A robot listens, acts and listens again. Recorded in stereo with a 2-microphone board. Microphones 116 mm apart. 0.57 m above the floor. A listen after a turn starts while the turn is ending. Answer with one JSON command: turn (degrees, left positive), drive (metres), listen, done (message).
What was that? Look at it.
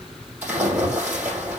{"turn": -15}
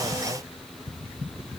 {"listen": true}
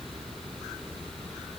{"done": "I heard a splash, but can't make it out now. It was about straight ahead or 150° right."}